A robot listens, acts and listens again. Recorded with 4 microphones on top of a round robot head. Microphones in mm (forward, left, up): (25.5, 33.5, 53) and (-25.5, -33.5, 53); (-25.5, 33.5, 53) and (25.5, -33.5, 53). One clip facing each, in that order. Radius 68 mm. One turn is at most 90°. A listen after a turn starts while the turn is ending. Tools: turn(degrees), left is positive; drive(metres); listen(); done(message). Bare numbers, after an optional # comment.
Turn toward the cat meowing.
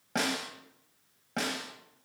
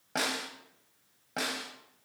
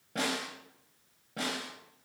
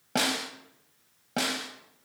listen()
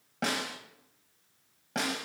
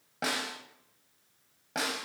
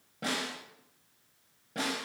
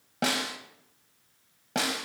listen()
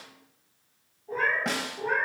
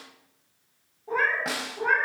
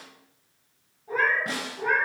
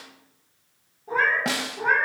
# The cat meowing: 105° right.
turn(-90)
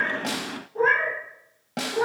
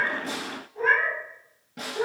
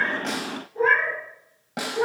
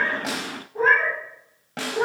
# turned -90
done("Facing the cat meowing.")